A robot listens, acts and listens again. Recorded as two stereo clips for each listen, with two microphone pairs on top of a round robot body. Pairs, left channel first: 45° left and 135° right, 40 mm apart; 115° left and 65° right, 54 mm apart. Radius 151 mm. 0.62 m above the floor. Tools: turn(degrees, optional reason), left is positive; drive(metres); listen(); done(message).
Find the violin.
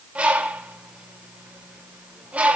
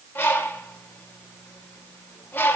listen()
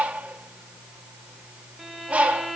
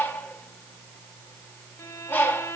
turn(degrees=130, reason="The violin: 130° left.")
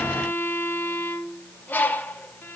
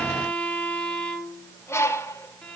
turn(degrees=45, reason="The violin is now 45° left.")
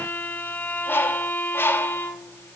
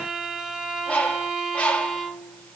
turn(degrees=15, reason="The violin is now 15° left.")
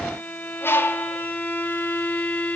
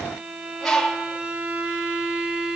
done("Found it: a violin, straight ahead, 2 to 4 m away.")